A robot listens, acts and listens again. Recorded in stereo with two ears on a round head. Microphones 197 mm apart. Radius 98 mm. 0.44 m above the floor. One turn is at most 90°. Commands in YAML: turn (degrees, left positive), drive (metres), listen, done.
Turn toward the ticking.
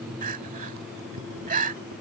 listen: true
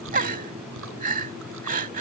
listen: true
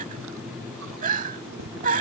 done: "I can't make out ticking to turn to."